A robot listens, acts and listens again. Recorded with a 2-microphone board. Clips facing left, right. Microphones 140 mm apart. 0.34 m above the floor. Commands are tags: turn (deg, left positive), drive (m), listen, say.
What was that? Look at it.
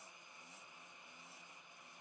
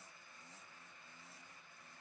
<listen/>
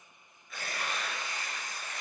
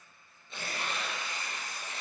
<turn deg="-25"/>
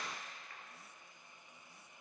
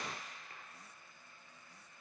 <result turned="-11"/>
<turn deg="-140"/>
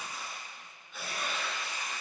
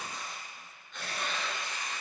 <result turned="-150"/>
<turn deg="10"/>
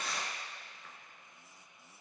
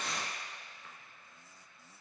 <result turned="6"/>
<say>Facing the tearing paper.</say>